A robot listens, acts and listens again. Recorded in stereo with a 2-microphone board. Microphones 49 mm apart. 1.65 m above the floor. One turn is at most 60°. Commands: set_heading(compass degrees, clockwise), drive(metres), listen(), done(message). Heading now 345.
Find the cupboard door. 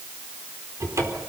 set_heading(45)
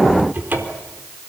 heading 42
set_heading(82)
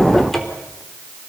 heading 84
done("Facing the cupboard door.")